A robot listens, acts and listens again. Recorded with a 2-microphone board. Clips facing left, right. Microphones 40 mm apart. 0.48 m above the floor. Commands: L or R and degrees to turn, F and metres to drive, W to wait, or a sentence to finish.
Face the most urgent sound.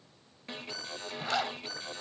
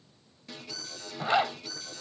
L35
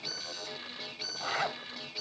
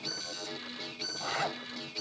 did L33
L10
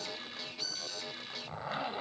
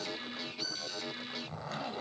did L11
Facing the alarm.